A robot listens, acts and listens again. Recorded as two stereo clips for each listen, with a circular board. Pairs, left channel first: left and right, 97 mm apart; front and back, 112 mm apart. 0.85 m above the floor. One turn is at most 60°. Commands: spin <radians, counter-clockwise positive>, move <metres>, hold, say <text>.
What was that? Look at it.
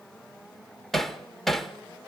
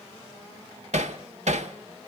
spin 1.05
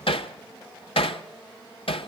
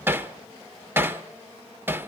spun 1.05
spin 1.05
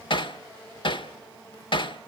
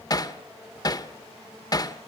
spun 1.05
spin 0.96
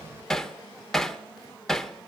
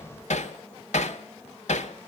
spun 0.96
say Facing the hammering, 1 to 2 m away.